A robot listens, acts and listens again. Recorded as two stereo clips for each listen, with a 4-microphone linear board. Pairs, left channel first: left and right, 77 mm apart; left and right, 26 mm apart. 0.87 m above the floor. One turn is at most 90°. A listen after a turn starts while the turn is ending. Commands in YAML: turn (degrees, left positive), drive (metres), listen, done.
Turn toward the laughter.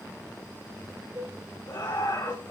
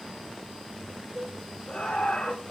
turn: 70
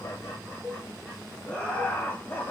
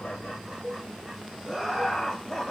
turn: 25
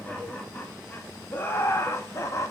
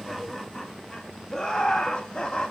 turn: 40
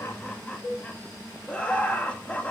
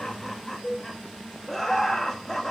turn: 15
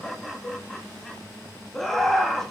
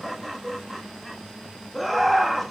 done: "Found it: laughter, straight ahead."